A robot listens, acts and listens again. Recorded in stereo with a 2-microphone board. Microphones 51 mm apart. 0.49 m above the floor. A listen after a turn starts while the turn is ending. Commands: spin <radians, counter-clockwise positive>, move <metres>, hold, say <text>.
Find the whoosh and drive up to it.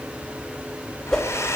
spin 0.52
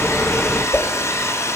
spin 2.44
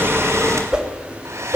spin -0.26
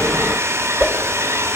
move 1.0
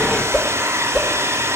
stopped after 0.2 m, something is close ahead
say Blocked. The whoosh is further on, straight ahead.